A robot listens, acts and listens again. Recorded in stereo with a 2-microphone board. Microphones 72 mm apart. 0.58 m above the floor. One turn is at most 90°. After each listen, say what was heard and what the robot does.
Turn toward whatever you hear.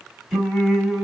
Turn 30° right.
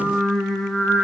Turn 30° left.
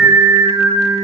So it is at 60° right. Turn 60° right.
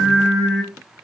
The singing is now 15° right. Turn 15° right.
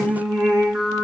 The singing is now 15° right. Turn 15° right.
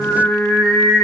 Facing the singing, 2 to 4 m away.